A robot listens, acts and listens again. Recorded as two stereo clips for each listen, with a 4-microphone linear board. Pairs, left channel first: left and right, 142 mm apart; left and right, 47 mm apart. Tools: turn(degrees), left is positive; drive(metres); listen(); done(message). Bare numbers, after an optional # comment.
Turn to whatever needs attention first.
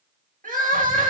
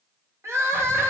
# The crying: about 70° right or 110° right.
turn(-70)
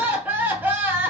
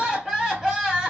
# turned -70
# So it is at 15° right.
turn(-15)
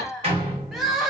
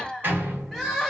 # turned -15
done("Facing the crying, under 1 m away.")